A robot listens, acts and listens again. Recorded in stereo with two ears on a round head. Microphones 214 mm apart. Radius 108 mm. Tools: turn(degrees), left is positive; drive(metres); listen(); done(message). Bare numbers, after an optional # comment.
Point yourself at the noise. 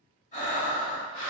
# The breathing: about 35° left or 145° left.
turn(35)
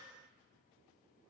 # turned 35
listen()
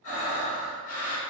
# So it is at 110° left.
turn(110)
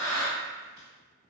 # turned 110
# The breathing is now 35° right.
turn(-35)
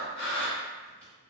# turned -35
done("Found it: breathing, straight ahead.")